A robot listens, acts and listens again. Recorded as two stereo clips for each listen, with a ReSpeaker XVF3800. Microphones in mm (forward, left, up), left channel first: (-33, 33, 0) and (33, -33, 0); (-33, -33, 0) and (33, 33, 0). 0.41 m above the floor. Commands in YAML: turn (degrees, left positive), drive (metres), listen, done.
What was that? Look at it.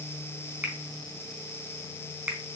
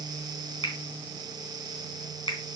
turn: -110
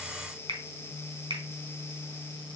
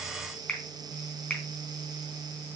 turn: -50
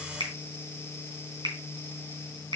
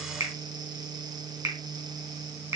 done: "Found it: a finger snap, straight ahead."